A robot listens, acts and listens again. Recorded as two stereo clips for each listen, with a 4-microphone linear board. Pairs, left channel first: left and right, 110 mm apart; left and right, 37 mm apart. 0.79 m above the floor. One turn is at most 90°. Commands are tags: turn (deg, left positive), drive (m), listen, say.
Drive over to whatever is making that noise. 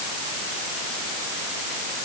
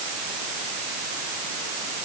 <listen/>
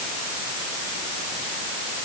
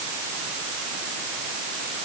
<listen/>
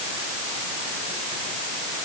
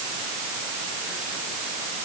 <say>I can't make out anything to turn to.</say>